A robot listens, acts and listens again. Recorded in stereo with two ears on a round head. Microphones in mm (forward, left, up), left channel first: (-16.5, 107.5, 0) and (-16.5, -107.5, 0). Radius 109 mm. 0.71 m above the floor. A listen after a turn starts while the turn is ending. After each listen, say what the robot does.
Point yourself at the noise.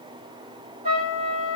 Turn 25° right.
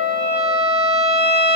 Facing the trumpet.